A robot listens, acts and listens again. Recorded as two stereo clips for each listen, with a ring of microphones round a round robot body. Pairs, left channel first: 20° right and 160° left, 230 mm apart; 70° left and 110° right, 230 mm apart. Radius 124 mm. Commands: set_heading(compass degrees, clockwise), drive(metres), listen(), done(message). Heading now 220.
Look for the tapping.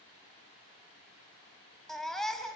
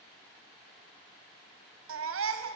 listen()
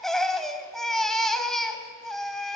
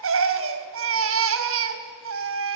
listen()
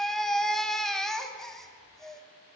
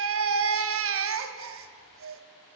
done("I can't make out tapping to turn to.")